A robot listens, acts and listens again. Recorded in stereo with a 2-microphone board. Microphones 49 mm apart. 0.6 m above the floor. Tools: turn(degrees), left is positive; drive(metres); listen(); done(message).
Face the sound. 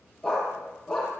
turn(degrees=30)
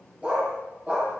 turn(degrees=-25)
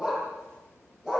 turn(degrees=-15)
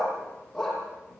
done("Found it: a dog barking, straight ahead, over 4 m away.")